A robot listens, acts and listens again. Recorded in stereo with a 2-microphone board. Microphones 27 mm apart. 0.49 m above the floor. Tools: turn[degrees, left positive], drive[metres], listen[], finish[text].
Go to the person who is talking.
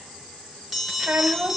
Thought: The child speaking: about 50° right or 130° right.
Action: turn[-50]
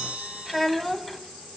Action: drive[1.0]
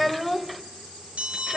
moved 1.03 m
Action: drive[1.0]
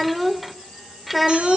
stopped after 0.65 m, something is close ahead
Action: finish[I am next to the child speaking.]